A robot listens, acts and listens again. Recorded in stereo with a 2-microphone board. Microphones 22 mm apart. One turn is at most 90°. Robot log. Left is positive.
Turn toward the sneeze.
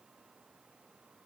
cmd idle
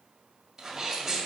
note: The sneeze: about 20° right or 160° right.
cmd yaw -20
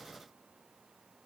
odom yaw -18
cmd idle
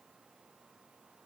end: I heard a sneeze, but can't make it out now. It was about straight ahead or 140° right.